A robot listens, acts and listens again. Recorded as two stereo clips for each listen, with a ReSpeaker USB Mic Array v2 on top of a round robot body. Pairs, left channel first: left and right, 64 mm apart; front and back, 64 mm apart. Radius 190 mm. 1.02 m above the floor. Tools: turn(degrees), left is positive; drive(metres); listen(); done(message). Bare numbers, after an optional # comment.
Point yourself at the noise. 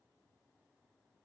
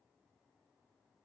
listen()
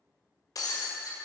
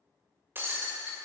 # The breaking glass: 120° left.
turn(120)
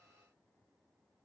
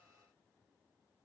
done("Facing where the breaking glass came from. I can't hear it now.")